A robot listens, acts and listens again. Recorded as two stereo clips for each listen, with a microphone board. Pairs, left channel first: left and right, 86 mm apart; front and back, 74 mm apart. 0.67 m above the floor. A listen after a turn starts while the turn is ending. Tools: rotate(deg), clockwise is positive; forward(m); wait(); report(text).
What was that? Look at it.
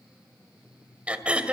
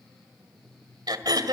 rotate(165)
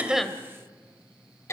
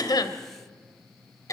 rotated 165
rotate(-35)
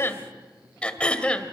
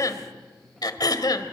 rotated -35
rotate(-15)
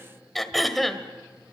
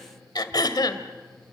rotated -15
report("Found it: throat clearing, straight ahead, 1 to 2 m away.")